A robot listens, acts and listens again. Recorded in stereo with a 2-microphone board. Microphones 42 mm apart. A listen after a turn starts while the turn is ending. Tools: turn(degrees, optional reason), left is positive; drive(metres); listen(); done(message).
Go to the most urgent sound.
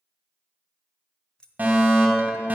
turn(degrees=-45, reason="The fire alarm: about 45° right or 135° right.")
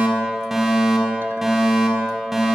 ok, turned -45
drive(metres=1.0)
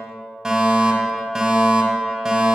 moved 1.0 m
turn(degrees=-15, reason="The fire alarm is now 15° right.")
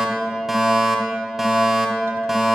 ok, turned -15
drive(metres=1.0)
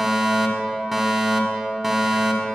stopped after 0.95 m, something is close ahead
done("Arrived at the fire alarm, straight ahead.")